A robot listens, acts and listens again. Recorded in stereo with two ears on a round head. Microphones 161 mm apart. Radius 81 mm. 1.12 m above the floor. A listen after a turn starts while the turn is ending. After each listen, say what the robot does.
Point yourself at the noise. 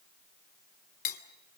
Turn 50° left.
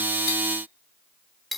Found it: cutlery clinking, straight ahead.